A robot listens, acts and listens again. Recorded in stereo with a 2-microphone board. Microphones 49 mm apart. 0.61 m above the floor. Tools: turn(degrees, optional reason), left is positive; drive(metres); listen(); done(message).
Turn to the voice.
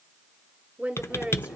turn(degrees=-25, reason="The woman speaking: about 25° right or 155° right.")
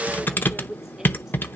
done("Facing the woman speaking.")